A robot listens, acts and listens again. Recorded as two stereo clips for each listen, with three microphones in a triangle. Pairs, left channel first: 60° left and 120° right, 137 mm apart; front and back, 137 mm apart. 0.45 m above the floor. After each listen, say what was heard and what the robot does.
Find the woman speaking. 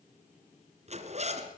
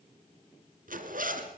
Keep listening.
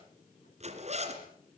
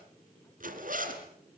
Keep listening.
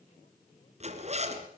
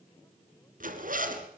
I can't make out a woman speaking to turn to.